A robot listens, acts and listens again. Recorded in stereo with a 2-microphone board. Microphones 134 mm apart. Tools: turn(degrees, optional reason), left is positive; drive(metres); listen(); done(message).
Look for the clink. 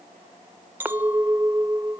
turn(degrees=-30)
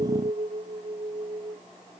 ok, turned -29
turn(degrees=-135, reason="So it is at 135° right.")
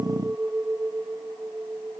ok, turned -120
turn(degrees=-15, reason="The clink is now 15° right.")
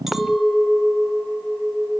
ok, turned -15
done("Found it: a clink, straight ahead.")